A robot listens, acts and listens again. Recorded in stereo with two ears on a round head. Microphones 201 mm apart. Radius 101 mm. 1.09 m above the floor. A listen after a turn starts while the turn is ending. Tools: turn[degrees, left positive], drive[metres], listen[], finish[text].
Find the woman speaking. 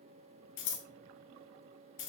Action: listen[]
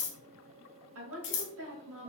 Thought: The woman speaking: about 70° right or 110° right.
Action: turn[-70]
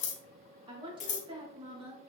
Thought: So it is at 25° right.
Action: turn[-25]
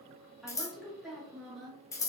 Action: finish[Facing the woman speaking, 1 to 2 m away.]